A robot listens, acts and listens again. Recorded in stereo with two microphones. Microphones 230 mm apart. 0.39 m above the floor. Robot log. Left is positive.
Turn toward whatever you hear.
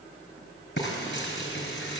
note: The frying: about 55° left or 125° left.
cmd yaw +55
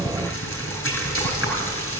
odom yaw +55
note: So it is at 70° left.
cmd yaw +70
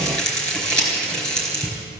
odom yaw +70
end: Found it: frying, straight ahead.